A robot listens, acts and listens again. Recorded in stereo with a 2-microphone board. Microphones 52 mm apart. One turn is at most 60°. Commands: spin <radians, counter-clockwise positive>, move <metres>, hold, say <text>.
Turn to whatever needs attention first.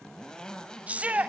spin -0.52
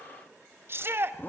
spin -1.05
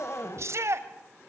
spin -1.05
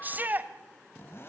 spin -0.70
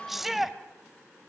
say Facing the shout.